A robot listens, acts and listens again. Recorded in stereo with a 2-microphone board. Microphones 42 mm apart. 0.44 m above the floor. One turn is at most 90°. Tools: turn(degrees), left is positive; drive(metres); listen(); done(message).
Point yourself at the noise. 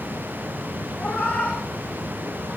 turn(degrees=35)
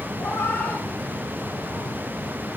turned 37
turn(degrees=90)
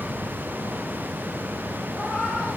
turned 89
turn(degrees=15)
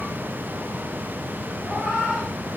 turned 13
done("Facing the cat meowing, over 4 m away.")